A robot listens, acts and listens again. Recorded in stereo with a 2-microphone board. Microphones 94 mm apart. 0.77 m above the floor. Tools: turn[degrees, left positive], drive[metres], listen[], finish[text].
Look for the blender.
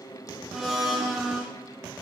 Action: turn[-30]
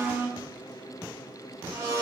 Thought: So it is at 145° right.
Action: turn[-145]
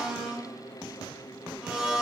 Thought: The blender is now 10° right.
Action: turn[-10]
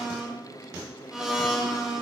Action: finish[Found it: a blender, straight ahead.]